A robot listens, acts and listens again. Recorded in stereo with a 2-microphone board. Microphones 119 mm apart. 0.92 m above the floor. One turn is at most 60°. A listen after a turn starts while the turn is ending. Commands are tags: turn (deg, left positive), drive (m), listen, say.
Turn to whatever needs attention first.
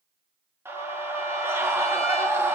<turn deg="-20"/>
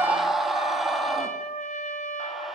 <say>Found it: a scream, straight ahead, 1 to 2 m away.</say>